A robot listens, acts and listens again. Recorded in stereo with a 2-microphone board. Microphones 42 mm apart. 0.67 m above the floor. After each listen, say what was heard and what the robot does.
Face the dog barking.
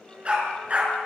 The dog barking: about 30° right or 150° right. Turn 30° right.
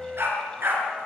So it is at 110° right. Turn 110° right.
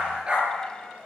The dog barking is now 25° right. Turn 25° right.
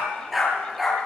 Found it: a dog barking, straight ahead.